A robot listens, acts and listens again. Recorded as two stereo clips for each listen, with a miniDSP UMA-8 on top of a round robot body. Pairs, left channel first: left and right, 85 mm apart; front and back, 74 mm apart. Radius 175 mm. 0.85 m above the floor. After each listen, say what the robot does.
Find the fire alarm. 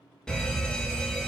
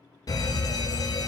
Turn 10° left.
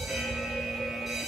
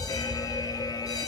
Found it: a fire alarm, straight ahead.